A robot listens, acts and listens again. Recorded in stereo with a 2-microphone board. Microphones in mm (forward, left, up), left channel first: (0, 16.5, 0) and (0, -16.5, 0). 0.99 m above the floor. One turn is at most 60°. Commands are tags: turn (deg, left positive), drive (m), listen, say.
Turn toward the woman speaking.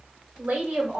<turn deg="-60"/>
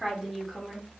<say>Found it: a woman speaking, straight ahead.</say>